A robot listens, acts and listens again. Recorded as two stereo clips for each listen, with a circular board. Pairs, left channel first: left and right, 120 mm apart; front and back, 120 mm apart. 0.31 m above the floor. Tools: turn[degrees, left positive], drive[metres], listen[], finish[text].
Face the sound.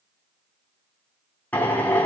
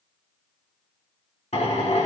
Thought: The drill: 15° left.
Action: turn[15]
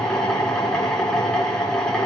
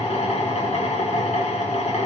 Action: finish[Found it: a drill, straight ahead, 2 to 4 m away.]